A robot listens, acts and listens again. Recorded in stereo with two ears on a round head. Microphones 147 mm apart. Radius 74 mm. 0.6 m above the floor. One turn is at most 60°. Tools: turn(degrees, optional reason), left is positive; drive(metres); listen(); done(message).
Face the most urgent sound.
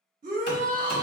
turn(degrees=-55, reason="The shout: about 55° right or 125° right.")
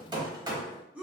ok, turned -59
turn(degrees=-10, reason="So it is at 10° right.")
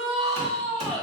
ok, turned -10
done("Facing the shout.")